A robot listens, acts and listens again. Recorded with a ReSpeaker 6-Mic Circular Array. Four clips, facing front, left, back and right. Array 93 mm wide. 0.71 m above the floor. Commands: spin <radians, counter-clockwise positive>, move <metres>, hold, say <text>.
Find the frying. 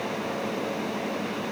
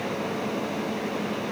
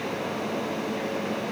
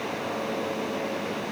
hold
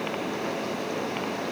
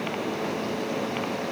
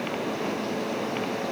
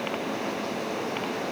hold
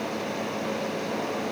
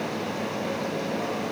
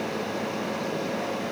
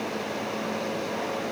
say I can't make out frying to turn to.